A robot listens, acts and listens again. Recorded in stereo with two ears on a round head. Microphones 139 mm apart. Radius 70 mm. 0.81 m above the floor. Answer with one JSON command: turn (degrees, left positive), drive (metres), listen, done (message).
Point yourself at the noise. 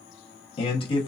{"turn": 35}
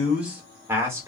{"turn": -15}
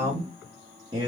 {"turn": -30}
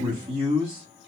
{"turn": -35}
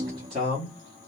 {"turn": -30}
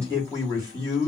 {"turn": -20}
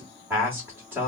{"turn": -10}
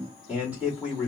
{"done": "Found it: a man speaking, straight ahead."}